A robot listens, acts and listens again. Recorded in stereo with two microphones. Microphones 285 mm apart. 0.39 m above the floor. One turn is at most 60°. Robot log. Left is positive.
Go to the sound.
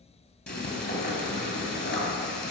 note: The frying: about 40° left or 140° left.
cmd yaw +40
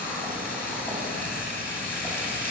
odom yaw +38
note: So it is at 10° left.
cmd yaw +10
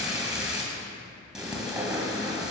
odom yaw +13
cmd fwd 1.0
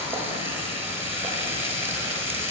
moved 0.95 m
note: The frying is now 10° right.
cmd yaw -10
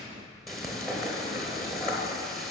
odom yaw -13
cmd fwd 1.0
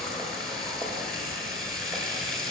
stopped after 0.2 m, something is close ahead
end: I am next to the frying.